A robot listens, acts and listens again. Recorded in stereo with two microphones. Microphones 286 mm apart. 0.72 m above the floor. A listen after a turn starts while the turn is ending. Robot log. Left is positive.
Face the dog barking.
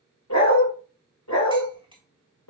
note: The dog barking: about 75° left or 105° left.
cmd yaw +75
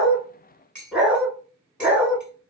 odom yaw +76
end: Found it: a dog barking, straight ahead.